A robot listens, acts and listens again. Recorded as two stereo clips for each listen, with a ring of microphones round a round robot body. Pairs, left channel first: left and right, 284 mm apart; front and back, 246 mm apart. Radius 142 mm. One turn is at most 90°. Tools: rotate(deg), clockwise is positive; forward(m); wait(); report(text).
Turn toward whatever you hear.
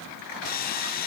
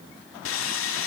rotate(-30)
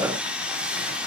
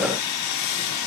report("Found it: sawing, straight ahead.")